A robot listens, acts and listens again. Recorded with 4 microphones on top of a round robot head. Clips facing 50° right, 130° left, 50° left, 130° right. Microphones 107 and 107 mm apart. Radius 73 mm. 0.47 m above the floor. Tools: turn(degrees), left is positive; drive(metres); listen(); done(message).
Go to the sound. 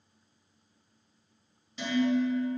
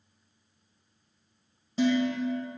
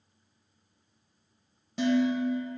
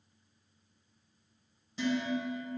turn(degrees=75)
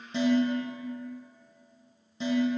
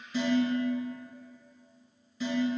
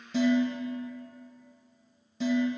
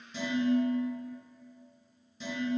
turn(degrees=15)
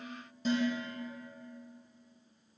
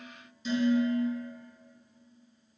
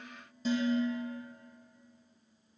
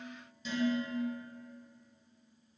drive(metres=1.0)
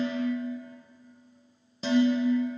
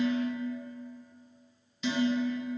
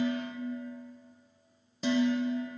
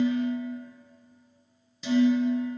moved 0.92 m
drive(metres=1.0)
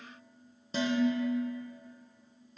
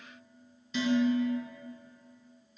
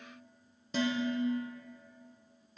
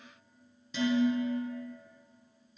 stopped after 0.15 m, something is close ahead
done("I am next to the dishes clattering.")